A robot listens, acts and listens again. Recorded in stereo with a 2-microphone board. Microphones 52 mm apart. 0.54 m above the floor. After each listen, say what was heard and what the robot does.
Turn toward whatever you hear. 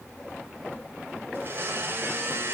The blender: about 45° right or 135° right. Turn 45° right.
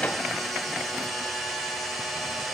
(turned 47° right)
Found it: a blender, straight ahead.